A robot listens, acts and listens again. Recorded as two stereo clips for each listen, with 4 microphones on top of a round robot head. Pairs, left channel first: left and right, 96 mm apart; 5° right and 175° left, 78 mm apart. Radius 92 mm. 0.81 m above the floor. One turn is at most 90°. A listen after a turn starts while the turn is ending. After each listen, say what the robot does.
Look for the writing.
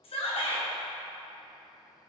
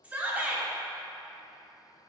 Keep listening.
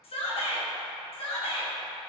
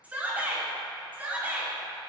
Keep listening.
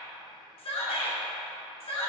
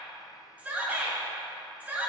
I can't make out writing, only a shout.